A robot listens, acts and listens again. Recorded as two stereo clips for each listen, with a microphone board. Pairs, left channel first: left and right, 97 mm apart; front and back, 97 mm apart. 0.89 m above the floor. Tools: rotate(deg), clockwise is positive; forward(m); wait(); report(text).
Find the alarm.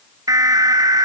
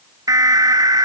rotate(135)
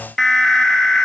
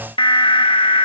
report("Found it: an alarm, straight ahead.")